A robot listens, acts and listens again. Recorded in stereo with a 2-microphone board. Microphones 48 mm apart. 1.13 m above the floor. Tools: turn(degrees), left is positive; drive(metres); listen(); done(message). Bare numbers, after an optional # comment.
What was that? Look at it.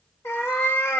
# The cat meowing: about 60° left or 120° left.
turn(60)
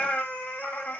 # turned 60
# So it is at 40° left.
turn(40)
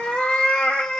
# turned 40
# The cat meowing is now 20° left.
turn(20)
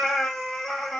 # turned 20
done("Facing the cat meowing, under 1 m away.")